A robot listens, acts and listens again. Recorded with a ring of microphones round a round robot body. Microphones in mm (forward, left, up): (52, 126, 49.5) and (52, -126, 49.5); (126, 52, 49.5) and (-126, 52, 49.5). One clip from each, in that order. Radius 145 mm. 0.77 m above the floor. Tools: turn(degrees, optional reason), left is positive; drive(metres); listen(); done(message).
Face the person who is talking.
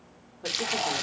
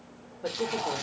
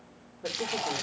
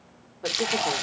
turn(degrees=175, reason="The woman speaking: 175° left.")
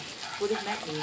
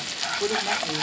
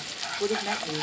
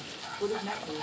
turn(degrees=15, reason="The woman speaking is now 15° left.")
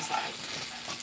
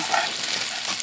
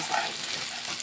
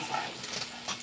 listen()
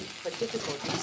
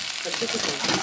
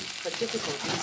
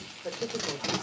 turn(degrees=10, reason="The woman speaking is now 10° left.")
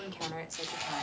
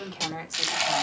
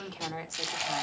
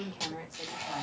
done("Found it: a woman speaking, straight ahead.")